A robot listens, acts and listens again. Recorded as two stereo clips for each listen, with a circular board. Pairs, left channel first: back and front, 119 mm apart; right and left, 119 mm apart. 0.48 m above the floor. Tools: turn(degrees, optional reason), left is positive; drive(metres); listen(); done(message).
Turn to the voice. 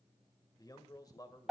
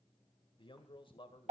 turn(degrees=-125, reason="The man speaking: 125° right.")
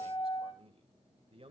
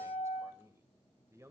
turn(degrees=25, reason="The man speaking is now 25° left.")
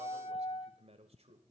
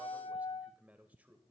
turn(degrees=15, reason="The man speaking is now 15° left.")
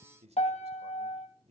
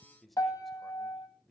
done("Facing the man speaking, 1 to 2 m away.")